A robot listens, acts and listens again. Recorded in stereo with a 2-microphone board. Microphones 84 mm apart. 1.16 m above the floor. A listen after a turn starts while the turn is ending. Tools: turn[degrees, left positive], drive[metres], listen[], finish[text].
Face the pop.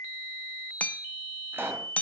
Thought: The pop: about 25° right or 155° right.
Action: turn[-25]
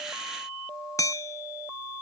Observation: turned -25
Action: listen[]
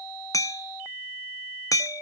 Action: finish[I heard a pop, but can't make it out now. It was about straight ahead or 130° right.]